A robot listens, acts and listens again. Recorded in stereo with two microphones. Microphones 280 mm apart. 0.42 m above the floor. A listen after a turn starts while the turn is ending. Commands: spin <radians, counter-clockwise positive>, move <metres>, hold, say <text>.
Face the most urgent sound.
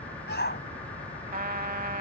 spin 0.70
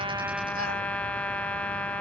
hold
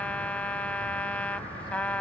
hold
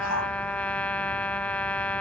spin 1.66
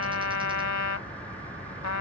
hold
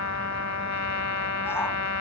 hold
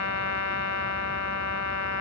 say Facing where the shout came from. I can't hear it now.